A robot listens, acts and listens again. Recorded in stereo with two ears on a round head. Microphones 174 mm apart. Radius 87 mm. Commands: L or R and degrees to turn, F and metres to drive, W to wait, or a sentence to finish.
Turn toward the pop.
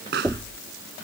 R60
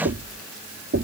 W
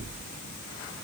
I heard a pop, but can't make it out now. It was about straight ahead or 60° right.